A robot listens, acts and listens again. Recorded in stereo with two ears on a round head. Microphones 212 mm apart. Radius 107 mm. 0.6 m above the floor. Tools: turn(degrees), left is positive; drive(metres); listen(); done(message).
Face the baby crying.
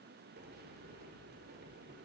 listen()
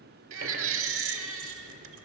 turn(degrees=-60)
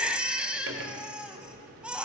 done("Found it: a baby crying, straight ahead.")